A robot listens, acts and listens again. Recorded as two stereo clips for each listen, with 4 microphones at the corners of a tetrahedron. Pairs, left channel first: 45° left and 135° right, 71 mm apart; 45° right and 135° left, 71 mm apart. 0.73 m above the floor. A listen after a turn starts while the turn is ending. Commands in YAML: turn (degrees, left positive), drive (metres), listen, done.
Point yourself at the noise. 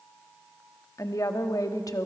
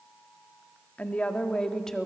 turn: 40
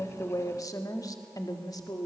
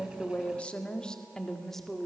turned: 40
turn: 45
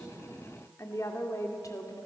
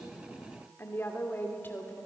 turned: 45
turn: 15
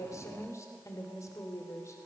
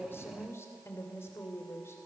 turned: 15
done: "Facing the woman speaking, 2 to 4 m away."